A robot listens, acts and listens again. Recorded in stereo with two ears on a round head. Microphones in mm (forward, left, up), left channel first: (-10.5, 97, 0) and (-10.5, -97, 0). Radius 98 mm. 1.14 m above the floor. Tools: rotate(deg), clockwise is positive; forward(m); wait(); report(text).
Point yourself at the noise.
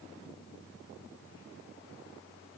wait()
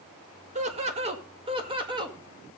rotate(20)
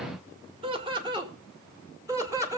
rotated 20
rotate(30)
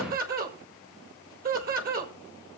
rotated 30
rotate(135)
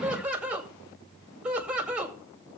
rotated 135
report("Facing the laughter.")